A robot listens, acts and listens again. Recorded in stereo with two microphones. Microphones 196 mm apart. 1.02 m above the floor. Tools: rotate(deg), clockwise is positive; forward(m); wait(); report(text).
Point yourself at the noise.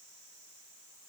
wait()
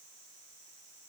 wait()
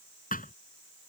rotate(-45)
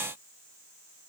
wait()
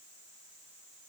report("I heard a thud, but can't make it out now. It was about straight ahead or 90° left.")